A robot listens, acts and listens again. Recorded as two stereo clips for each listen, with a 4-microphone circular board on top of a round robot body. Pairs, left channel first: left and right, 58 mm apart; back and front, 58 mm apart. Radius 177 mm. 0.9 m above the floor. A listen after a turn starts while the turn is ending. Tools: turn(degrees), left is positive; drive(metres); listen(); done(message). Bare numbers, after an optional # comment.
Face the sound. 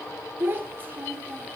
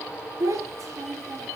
# The child speaking: 30° right.
turn(-30)
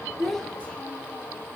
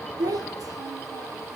listen()
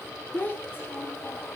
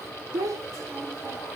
# The child speaking is now 30° left.
turn(30)
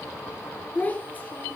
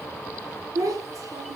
# The child speaking is now 25° left.
turn(25)
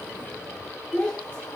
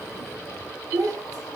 # The child speaking is now 15° left.
turn(15)
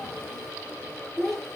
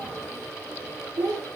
done("Found it: a child speaking, straight ahead.")